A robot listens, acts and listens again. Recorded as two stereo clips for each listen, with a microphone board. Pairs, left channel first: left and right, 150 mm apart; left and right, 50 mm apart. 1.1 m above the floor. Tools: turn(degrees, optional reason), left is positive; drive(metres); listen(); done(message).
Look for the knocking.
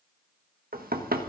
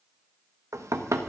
turn(degrees=-90)
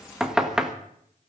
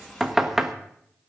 done("Found it: knocking, straight ahead.")